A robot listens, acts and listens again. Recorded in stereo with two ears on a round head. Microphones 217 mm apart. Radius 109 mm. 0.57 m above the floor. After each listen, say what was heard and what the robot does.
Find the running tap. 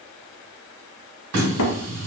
The running tap: about 70° right or 110° right. Turn 70° right.
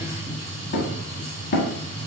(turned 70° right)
So it is at 35° right. Turn 35° right.
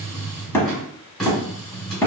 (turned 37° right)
Facing the running tap.